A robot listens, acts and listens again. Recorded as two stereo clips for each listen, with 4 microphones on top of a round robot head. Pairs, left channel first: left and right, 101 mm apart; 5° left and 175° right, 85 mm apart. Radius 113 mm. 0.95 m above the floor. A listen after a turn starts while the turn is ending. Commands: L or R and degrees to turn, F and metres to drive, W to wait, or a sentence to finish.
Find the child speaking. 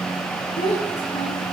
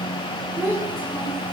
L125
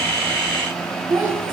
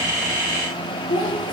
R25
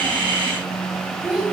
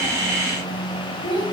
Found it: a child speaking, straight ahead, over 4 m away.